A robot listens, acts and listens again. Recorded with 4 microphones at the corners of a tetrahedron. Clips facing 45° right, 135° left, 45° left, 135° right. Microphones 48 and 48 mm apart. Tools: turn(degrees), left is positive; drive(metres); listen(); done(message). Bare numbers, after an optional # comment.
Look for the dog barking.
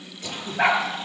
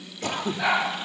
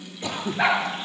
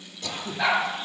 # The dog barking: 10° right.
turn(-10)
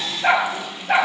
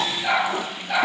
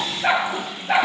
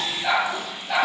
done("Facing the dog barking, over 4 m away.")